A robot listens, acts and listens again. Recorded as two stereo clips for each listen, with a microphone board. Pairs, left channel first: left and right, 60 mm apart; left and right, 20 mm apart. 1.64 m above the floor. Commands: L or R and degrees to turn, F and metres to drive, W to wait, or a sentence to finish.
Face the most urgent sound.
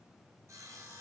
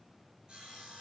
W
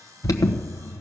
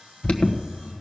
L75
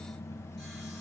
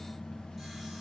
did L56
W
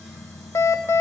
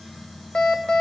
L50
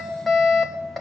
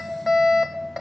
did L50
Facing the alarm.